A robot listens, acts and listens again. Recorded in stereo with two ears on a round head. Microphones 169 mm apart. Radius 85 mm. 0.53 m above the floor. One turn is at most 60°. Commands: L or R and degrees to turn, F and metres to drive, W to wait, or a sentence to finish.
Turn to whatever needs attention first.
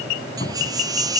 R20
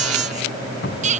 R60
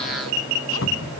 R60
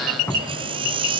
R25
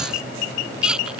Facing the baby crying.